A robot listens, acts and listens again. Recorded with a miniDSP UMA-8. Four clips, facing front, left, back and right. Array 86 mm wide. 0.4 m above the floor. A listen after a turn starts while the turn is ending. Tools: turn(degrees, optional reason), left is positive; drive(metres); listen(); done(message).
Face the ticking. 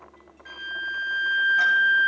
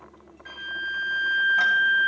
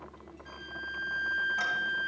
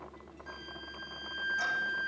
listen()
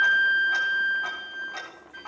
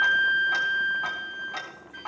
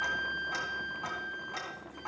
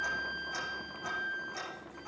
turn(degrees=95, reason="The ticking: 95° left.")
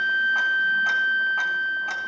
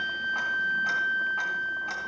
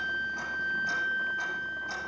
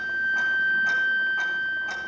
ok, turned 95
listen()
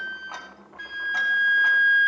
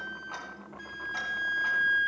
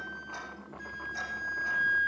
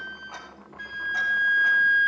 listen()
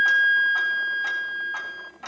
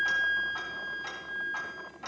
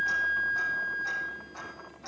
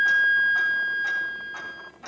done("Facing the ticking.")